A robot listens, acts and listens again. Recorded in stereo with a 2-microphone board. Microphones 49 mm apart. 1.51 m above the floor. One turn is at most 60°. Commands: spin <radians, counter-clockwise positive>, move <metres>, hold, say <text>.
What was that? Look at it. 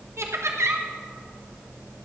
spin -1.05
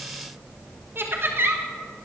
spin -0.87
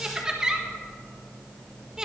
spin -0.26
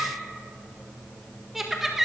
say Facing the laughter, 1 to 2 m away.